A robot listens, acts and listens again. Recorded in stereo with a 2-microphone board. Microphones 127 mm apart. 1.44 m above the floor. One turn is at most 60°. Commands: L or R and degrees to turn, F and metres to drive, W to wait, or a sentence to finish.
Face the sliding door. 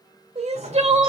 R60
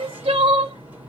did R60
R15
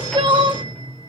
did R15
Found it: a sliding door, straight ahead.